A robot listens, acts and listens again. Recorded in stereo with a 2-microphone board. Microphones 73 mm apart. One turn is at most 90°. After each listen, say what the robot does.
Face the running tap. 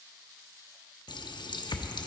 Turn 75° left.
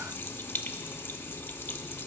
Turn 30° left.
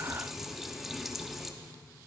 Found it: a running tap, straight ahead.